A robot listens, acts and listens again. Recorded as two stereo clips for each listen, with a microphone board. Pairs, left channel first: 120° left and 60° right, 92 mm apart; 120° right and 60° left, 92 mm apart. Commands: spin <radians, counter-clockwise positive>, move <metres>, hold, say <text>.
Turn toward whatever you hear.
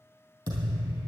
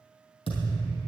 spin -2.01
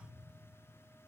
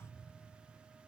say I heard a thud from this way, but can't make it out now.